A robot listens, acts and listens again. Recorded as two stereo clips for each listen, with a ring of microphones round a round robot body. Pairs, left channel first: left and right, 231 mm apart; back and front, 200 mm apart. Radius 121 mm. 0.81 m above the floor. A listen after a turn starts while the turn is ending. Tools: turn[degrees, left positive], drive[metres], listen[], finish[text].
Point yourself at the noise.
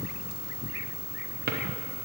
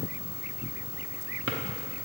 Thought: The drawer: 40° right.
Action: turn[-40]
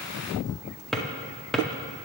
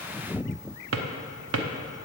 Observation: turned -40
Action: finish[Facing the drawer.]